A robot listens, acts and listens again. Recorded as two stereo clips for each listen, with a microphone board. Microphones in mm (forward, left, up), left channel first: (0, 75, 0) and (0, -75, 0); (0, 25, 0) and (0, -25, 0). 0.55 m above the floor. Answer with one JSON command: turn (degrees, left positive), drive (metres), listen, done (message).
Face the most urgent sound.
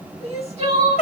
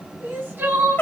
{"turn": -45}
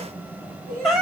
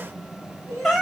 {"turn": -90}
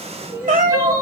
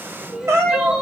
{"turn": -20}
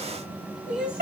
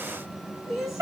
{"done": "Found it: crying, straight ahead, 1 to 2 m away."}